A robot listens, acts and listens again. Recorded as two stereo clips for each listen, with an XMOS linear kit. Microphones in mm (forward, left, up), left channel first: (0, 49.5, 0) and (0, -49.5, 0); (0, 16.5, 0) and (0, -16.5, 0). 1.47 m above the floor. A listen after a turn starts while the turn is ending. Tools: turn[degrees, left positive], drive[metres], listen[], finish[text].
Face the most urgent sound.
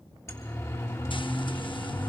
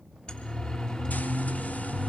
Thought: The siren: about 30° left or 150° left.
Action: turn[30]
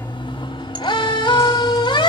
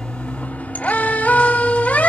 Thought: So it is at 125° left.
Action: turn[125]
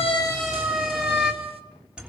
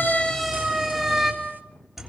Thought: The siren is now 10° right.
Action: turn[-10]
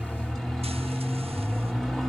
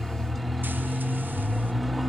Action: finish[Found it: a siren, straight ahead, 2 to 4 m away.]